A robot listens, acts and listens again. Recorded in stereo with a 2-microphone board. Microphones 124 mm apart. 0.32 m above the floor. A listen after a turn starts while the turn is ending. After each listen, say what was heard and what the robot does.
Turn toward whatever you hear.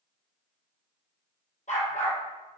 Turn 90° left.
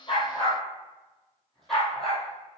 Facing the dog barking, 2 to 4 m away.